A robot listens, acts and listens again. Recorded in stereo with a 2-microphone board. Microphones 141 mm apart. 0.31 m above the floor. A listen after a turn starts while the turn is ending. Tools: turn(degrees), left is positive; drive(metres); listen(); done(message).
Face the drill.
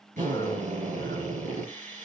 turn(degrees=-65)
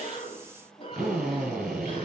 done("Found it: a drill, straight ahead, over 4 m away.")